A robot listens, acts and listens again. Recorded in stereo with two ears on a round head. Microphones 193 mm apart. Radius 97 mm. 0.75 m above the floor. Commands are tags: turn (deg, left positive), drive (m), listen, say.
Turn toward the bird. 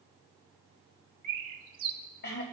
<turn deg="-45"/>
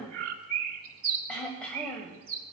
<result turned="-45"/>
<turn deg="-85"/>
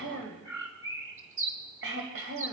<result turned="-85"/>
<turn deg="-15"/>
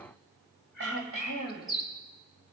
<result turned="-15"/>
<say>Found it: a bird, straight ahead.</say>